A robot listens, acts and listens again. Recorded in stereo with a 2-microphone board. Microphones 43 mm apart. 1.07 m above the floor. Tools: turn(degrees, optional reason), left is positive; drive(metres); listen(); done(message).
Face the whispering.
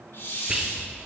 turn(degrees=-15, reason="The whispering: about 15° right or 165° right.")
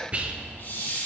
turn(degrees=-150, reason="So it is at 150° right.")
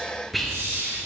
done("Facing the whispering.")